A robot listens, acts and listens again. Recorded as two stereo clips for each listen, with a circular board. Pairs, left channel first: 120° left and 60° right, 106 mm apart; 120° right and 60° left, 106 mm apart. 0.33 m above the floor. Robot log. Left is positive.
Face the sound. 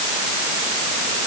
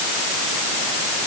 cmd idle
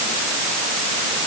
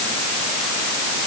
cmd idle
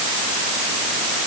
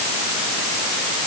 end: I can't make out anything to turn to.